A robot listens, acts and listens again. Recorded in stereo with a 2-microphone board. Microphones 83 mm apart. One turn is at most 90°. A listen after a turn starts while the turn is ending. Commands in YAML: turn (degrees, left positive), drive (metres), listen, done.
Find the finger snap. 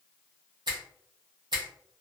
turn: -60
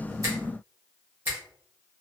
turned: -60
turn: -30
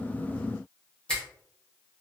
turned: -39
turn: 10
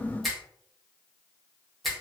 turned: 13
done: "Facing the finger snap."